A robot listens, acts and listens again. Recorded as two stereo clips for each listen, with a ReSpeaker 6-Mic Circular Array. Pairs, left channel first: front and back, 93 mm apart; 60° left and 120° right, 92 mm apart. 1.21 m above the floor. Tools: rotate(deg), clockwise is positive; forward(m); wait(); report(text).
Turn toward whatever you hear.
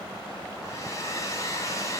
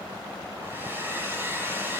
rotate(55)
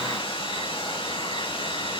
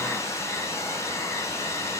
report("Facing the hair dryer.")